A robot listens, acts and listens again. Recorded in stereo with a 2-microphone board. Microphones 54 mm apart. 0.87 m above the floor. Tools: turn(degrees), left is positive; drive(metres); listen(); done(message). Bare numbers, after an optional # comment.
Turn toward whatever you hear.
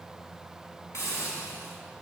# The hiss: about 60° left or 120° left.
turn(60)
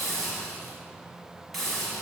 done("Facing the hiss, over 4 m away.")